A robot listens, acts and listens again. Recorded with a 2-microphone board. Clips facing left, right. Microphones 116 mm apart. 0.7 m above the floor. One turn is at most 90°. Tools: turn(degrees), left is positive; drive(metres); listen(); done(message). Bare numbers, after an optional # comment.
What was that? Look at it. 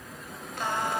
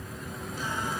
# The singing: about 70° left or 110° left.
turn(70)
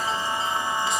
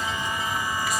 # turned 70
# So it is at 25° left.
turn(25)
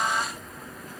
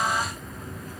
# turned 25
done("Facing the singing, 1 to 2 m away.")